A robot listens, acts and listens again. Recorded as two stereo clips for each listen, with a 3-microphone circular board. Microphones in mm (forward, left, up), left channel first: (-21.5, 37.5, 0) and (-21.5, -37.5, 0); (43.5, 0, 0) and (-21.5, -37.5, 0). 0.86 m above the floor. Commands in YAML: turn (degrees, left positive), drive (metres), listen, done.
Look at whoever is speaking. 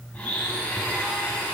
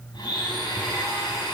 listen: true
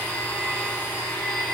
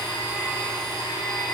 listen: true
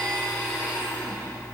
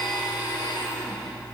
done: "I can't make out anyone speaking to turn to."